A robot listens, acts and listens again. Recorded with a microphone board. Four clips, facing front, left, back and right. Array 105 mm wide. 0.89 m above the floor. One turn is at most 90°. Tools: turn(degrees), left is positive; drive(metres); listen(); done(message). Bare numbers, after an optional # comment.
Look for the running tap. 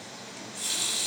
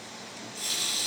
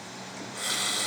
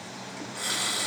# The running tap: 125° right.
turn(-90)
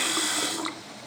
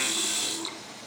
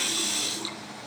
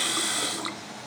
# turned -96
# The running tap is now 30° right.
turn(-30)
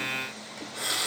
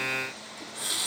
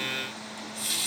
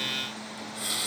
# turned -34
done("Facing the running tap, 1 to 2 m away.")